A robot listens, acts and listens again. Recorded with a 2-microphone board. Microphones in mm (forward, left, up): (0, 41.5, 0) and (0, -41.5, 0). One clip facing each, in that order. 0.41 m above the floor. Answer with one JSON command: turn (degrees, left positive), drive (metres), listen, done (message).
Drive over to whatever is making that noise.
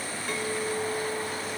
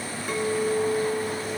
{"turn": -30}
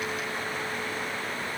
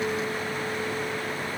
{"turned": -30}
{"listen": true}
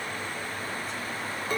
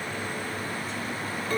{"turn": 20}
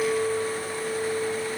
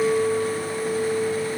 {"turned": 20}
{"drive": 1.0}
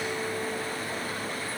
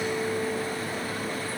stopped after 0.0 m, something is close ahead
{"done": "Something is in my way. I am facing the clink but have not reached it."}